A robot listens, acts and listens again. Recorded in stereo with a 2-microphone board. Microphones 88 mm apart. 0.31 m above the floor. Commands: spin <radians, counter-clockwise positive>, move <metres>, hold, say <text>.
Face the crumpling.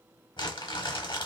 spin 1.05
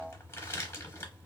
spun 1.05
spin 0.61
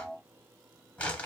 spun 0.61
spin 0.26
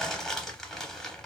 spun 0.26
say Facing the crumpling, under 1 m away.